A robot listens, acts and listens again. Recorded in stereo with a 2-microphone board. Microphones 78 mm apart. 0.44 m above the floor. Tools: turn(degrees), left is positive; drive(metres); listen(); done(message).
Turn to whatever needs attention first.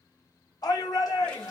turn(degrees=55)
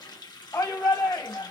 turn(degrees=55)
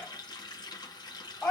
turn(degrees=30)
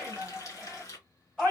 done("Found it: a shout, straight ahead, 1 to 2 m away.")